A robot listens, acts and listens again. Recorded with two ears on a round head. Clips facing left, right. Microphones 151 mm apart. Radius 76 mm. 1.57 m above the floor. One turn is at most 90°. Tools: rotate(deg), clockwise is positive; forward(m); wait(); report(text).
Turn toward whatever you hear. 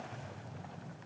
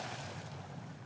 wait()
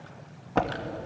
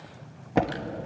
rotate(15)
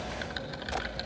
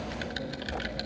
rotate(90)
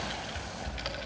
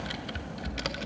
rotate(90)
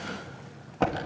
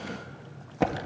rotate(10)
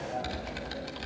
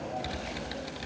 report("Found it: typing on a keyboard, straight ahead.")